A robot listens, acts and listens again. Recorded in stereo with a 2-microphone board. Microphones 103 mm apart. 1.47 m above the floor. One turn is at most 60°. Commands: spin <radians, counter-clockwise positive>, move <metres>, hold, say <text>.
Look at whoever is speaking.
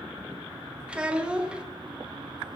spin -0.52
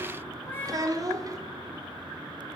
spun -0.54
spin -1.05
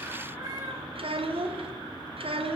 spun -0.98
spin -1.05
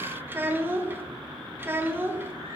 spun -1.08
spin -0.35
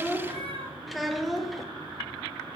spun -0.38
say Found it: a child speaking, straight ahead, under 1 m away.